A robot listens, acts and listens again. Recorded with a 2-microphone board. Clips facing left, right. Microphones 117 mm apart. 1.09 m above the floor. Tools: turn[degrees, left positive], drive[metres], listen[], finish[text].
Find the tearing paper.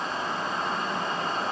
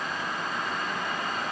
Action: listen[]
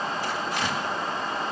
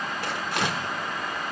Thought: The tearing paper: about 60° right or 120° right.
Action: turn[-60]
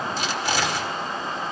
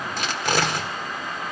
Thought: So it is at 55° right.
Action: turn[-55]
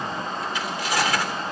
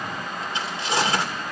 Thought: The tearing paper is now 30° right.
Action: turn[-30]
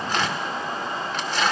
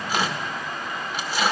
Thought: The tearing paper is now 10° right.
Action: turn[-10]
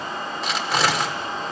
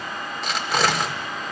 Action: finish[Facing the tearing paper, 1 to 2 m away.]